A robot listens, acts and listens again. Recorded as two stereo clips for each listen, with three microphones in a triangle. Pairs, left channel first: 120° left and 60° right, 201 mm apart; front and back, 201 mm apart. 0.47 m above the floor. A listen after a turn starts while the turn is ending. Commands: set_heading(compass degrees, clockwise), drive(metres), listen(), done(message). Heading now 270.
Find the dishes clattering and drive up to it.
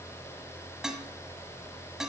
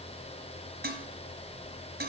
set_heading(60)
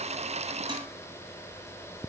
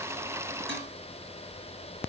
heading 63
listen()
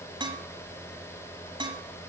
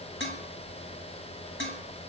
drive(1.0)
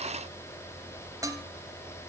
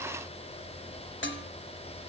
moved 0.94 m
set_heading(53)
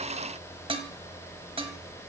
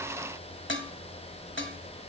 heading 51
drive(1.0)
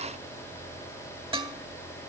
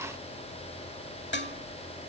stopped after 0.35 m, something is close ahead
done("I am next to the dishes clattering.")